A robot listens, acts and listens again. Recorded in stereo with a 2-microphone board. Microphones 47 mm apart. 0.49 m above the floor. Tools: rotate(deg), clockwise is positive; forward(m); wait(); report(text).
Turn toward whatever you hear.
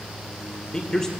rotate(-30)
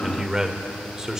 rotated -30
rotate(20)
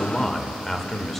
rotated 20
report("Found it: a man speaking, straight ahead.")